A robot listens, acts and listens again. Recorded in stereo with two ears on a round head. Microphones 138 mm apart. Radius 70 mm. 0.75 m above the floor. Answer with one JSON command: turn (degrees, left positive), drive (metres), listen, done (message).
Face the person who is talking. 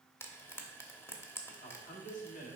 {"turn": 50}
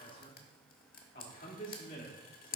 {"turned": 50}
{"turn": 65}
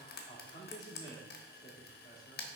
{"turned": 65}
{"turn": 25}
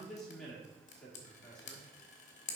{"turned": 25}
{"done": "Found it: a man speaking, straight ahead, 1 to 2 m away."}